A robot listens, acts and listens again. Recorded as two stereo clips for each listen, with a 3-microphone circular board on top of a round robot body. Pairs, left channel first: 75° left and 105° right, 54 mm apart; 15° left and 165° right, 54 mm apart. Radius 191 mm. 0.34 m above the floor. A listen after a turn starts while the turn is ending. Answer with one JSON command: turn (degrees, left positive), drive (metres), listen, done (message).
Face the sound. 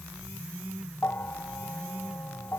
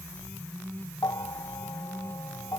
{"turn": 20}
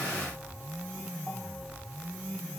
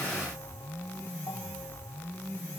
{"listen": true}
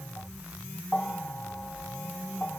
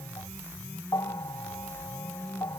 {"done": "Facing the bell."}